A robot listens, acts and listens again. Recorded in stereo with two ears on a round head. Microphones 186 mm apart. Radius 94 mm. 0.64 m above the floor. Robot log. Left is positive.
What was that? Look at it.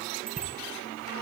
note: The bicycle bell: about 45° right or 135° right.
cmd yaw -45
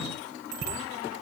note: So it is at 90° right.
cmd yaw -90
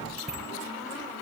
end: Found it: a bicycle bell, straight ahead, over 4 m away.